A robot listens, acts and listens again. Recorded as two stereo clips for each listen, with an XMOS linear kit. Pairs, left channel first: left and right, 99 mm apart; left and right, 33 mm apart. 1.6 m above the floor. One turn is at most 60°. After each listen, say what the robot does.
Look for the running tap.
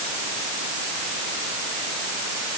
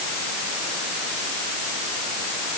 Keep listening.
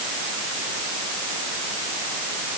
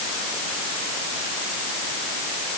Keep listening.
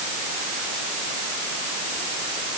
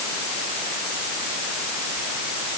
I can't make out a running tap to turn to.